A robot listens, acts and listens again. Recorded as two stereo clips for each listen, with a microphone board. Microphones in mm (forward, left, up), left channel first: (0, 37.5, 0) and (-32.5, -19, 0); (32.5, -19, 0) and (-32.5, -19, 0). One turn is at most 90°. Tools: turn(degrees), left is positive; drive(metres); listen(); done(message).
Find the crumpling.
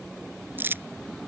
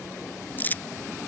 turn(degrees=-60)
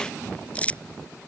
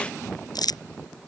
turn(degrees=-10)
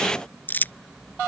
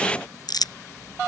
done("Found it: crumpling, straight ahead.")